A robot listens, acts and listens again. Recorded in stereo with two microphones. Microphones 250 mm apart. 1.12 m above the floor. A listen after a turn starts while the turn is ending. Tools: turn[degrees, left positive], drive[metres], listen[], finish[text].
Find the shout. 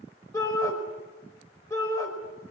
Action: turn[30]
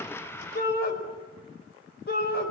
Thought: So it is at 140° left.
Action: turn[140]
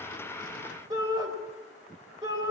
Thought: The shout is now 15° right.
Action: turn[-15]
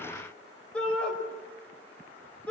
Action: finish[Found it: a shout, straight ahead, over 4 m away.]